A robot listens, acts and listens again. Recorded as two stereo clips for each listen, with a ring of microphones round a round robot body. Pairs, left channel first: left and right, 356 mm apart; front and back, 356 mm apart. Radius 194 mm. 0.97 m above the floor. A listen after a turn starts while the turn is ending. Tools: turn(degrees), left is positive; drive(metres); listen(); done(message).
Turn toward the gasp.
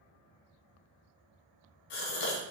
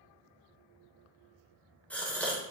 turn(degrees=85)
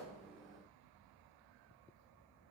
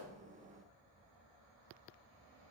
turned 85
done("I heard a gasp from this way, but can't make it out now.")